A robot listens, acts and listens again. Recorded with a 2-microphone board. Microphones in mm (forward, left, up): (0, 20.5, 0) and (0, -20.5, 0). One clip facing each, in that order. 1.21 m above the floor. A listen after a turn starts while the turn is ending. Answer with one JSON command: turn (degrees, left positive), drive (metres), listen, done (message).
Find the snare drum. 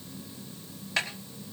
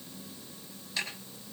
{"turn": 90}
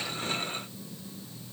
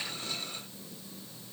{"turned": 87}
{"listen": true}
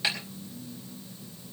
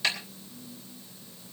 {"turn": 15}
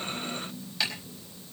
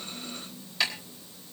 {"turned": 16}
{"done": "Facing the snare drum, over 4 m away."}